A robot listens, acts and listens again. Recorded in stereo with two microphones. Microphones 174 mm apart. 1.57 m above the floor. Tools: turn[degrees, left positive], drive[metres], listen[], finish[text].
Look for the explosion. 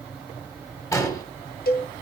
Thought: The explosion: about 20° left or 160° left.
Action: turn[20]
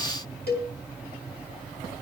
Action: listen[]
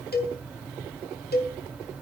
Action: finish[I heard an explosion, but can't make it out now. It was about straight ahead or 140° left.]